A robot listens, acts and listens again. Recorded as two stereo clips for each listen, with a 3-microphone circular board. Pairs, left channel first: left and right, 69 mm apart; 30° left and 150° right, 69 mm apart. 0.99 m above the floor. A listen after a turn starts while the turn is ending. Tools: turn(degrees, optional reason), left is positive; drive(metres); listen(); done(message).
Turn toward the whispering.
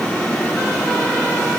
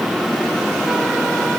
listen()
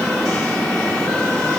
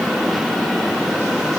listen()
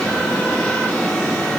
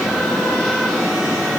done("I can't make out whispering.")